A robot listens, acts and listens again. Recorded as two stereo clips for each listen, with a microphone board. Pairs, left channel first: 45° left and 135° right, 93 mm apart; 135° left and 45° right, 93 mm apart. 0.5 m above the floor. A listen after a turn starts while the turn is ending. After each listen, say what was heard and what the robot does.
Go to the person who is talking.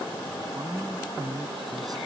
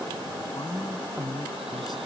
The woman speaking: 175° left. Turn 175° left.
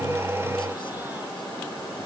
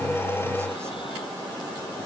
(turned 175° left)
Keep listening.
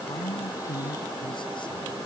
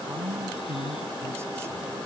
The woman speaking is now 15° left. Turn 15° left.
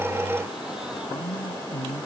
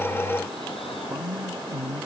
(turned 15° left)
Drive 1.0 m forward.
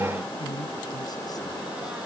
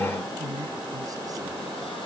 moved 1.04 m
Drive 1.0 m forward.
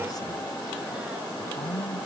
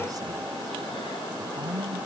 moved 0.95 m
Drive 1.0 m forward.
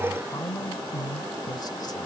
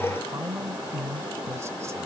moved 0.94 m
The woman speaking is now 10° left. Turn 10° left.
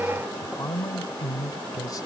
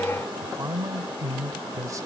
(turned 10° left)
Drive 1.0 m forward.
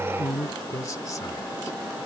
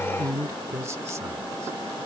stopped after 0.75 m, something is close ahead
Arrived at the woman speaking, straight ahead.